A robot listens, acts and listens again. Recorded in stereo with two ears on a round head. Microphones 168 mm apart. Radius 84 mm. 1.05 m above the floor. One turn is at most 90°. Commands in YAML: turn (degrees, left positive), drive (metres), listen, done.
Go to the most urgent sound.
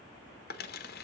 listen: true
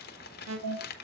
turn: -90
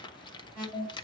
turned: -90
turn: -10
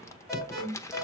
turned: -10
drive: 1.0
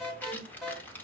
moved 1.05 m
drive: 1.0
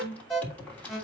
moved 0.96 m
drive: 1.0
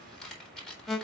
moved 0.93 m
drive: 1.0
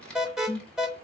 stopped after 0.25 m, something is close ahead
done: "I am next to the alarm."